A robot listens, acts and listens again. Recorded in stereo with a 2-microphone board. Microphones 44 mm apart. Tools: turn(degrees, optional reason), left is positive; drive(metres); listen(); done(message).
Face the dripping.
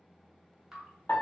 turn(degrees=-30)
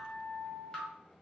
turn(degrees=25, reason="So it is at 25° left.")
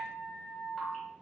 listen()
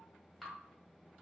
turn(degrees=10, reason="The dripping is now 10° left.")
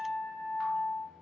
listen()
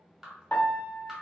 done("Facing the dripping.")